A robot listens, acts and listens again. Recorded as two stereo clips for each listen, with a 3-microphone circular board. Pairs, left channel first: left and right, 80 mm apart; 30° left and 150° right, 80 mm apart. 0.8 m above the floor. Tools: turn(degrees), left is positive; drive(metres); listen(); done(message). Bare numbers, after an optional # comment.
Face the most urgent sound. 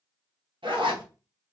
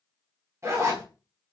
listen()
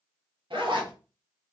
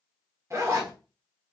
listen()
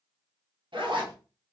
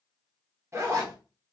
done("I can't make out anything urgent, only a zipper.")